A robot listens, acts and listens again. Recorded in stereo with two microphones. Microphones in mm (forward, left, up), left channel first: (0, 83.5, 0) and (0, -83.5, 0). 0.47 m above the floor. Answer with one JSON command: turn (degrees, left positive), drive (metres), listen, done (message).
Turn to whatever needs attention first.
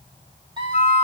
{"turn": -30}
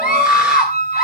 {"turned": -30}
{"done": "Facing the scream, 2 to 4 m away."}